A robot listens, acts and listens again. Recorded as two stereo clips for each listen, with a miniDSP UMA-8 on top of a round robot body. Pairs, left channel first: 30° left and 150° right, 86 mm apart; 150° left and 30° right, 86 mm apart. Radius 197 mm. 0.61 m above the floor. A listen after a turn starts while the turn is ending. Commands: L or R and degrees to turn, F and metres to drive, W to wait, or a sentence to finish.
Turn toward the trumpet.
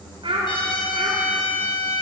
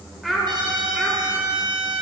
Facing the trumpet.